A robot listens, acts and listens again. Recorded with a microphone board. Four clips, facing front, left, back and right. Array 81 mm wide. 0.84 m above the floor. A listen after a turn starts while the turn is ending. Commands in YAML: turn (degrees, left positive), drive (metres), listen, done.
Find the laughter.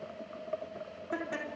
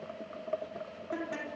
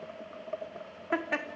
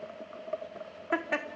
turn: -130
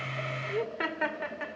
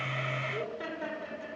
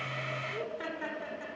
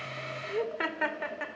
turn: -60
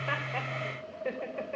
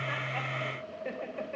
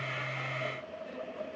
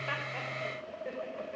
turn: 15
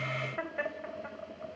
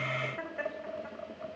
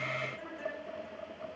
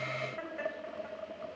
done: "Facing the laughter."